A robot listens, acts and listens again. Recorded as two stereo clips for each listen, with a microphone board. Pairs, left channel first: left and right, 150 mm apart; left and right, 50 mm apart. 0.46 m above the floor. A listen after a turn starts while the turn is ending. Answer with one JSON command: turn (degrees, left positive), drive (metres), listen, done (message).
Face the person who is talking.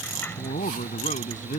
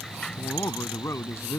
{"turn": 55}
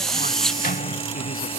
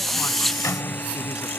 {"listen": true}
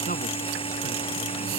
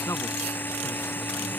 {"listen": true}
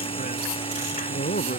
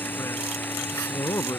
{"turn": 75}
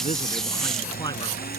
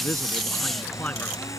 {"listen": true}
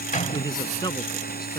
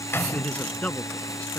{"turn": 30}
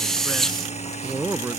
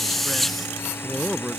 {"turn": -15}
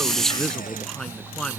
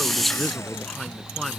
{"done": "Found it: a man speaking, straight ahead."}